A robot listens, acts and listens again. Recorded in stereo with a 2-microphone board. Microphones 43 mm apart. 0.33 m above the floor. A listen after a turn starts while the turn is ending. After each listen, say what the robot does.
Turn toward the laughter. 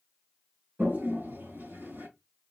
Keep listening.
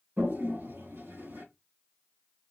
Keep listening.
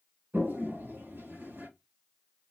I can't make out laughter, only a toilet flushing.